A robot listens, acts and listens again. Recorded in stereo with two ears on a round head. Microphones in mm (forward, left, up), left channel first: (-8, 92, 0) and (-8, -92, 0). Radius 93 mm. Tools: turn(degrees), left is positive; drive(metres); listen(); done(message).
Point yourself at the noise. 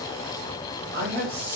turn(degrees=-45)
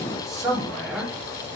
done("Found it: a man speaking, straight ahead.")